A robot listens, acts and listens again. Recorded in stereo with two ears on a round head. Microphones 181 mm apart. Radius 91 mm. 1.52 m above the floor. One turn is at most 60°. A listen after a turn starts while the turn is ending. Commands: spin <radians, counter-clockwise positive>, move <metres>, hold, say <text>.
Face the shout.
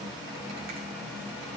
hold
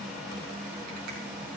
hold
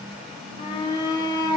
spin 0.44
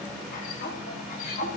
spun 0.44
spin 1.05
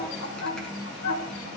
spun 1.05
spin 1.05
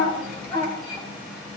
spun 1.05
spin 0.35
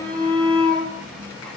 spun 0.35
say Facing the shout.